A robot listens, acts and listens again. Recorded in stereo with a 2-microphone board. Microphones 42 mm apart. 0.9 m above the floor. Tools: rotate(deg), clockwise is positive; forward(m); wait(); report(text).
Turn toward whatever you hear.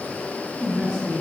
rotate(25)
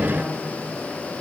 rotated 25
wait()
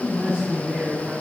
rotate(140)
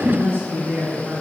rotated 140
rotate(50)
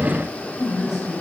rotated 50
report("Facing the woman speaking.")